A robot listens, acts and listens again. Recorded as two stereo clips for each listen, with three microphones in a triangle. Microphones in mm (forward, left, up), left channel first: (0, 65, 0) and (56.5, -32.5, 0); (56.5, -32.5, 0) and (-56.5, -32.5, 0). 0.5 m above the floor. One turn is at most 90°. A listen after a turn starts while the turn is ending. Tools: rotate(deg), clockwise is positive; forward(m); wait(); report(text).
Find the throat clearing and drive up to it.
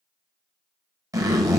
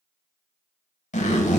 wait()
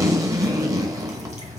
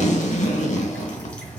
wait()
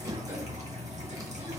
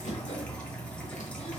report("I can't make out throat clearing, only a zipper and dripping.")